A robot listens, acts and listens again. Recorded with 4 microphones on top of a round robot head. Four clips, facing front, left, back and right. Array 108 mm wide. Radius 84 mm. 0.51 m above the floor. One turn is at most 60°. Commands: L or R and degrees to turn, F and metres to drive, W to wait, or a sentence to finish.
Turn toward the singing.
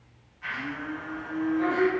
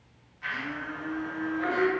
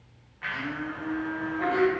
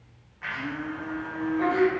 R60
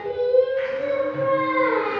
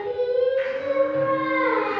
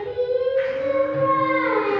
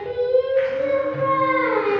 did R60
R60
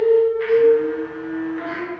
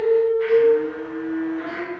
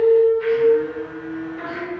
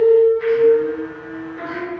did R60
R60
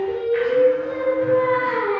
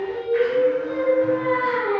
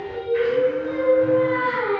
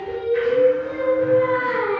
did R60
R40
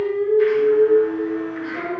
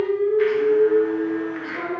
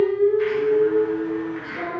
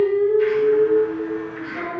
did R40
L25
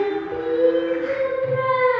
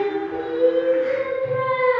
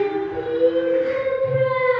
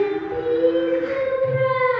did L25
R15
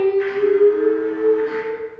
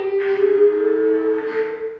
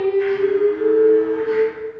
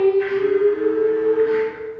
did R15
Found it: singing, straight ahead, 2 to 4 m away.